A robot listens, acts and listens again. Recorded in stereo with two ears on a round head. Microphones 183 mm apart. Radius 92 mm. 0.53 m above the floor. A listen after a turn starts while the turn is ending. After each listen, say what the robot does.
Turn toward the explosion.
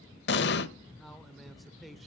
Turn 60° left.
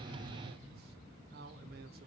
Keep listening.
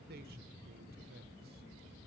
I heard an explosion, but can't make it out now. It was about straight ahead or 60° left.